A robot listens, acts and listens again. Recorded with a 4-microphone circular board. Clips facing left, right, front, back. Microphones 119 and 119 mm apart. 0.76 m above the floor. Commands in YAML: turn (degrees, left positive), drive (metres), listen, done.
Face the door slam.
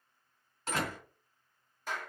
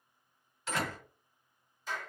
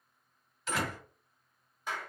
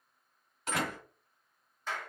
turn: 135
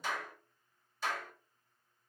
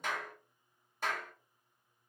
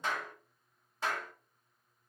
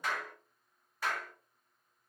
done: "Facing where the door slam came from. I can't hear it now."